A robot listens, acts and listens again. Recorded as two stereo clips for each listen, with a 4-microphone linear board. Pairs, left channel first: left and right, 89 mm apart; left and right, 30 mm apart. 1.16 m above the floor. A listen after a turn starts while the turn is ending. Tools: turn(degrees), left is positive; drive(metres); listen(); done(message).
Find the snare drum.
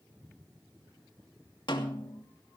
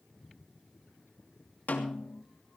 turn(degrees=70)
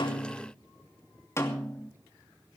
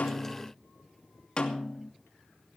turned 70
turn(degrees=35)
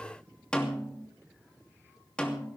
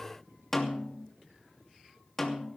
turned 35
turn(degrees=10)
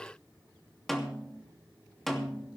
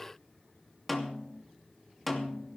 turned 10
done("Facing the snare drum.")